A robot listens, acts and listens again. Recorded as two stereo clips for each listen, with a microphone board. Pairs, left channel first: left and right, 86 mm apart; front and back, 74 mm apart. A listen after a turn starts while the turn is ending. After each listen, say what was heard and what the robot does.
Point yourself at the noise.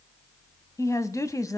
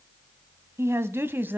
The woman speaking: 125° left. Turn 125° left.
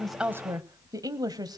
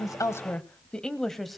The woman speaking is now 90° right. Turn 90° right.
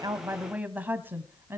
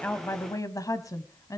The woman speaking is now 35° right. Turn 35° right.
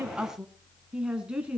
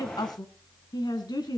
The woman speaking is now 15° right. Turn 15° right.
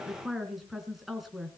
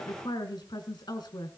Found it: a woman speaking, straight ahead, 2 to 4 m away.